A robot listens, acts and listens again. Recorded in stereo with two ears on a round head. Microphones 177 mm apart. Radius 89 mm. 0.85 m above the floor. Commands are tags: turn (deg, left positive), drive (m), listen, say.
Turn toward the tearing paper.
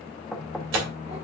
<turn deg="-65"/>
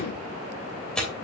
<say>Facing the tearing paper, 2 to 4 m away.</say>